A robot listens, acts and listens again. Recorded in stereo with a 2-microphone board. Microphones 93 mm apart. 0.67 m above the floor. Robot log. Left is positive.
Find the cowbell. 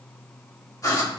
cmd idle
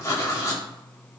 cmd idle
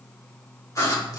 end: I can't make out a cowbell, only writing.